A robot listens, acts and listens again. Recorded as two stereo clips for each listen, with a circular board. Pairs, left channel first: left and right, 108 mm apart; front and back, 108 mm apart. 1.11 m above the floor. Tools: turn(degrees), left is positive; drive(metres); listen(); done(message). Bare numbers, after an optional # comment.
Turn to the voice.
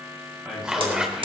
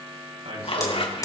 # The man speaking: 170° right.
turn(-170)
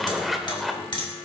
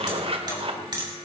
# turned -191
# Nothing new. It was at 20° left.
turn(20)
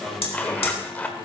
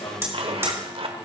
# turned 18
done("Found it: a man speaking, straight ahead.")